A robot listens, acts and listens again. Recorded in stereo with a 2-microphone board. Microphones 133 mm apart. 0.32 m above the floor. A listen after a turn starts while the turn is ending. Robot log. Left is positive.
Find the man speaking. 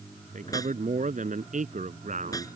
note: The man speaking: about 70° right or 110° right.
cmd yaw -70
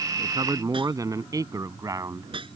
note: So it is at 25° right.
cmd yaw -25
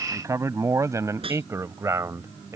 note: The man speaking is now 20° right.
cmd yaw -20
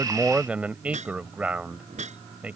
note: The man speaking is now 10° right.
cmd yaw -10
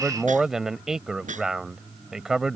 end: Facing the man speaking.